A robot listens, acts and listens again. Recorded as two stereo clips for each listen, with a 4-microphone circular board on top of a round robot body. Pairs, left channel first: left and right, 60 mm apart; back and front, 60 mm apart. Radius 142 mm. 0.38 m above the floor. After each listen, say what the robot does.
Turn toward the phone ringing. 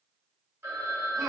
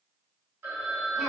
Turn 50° right.
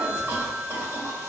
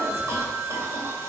Facing the phone ringing.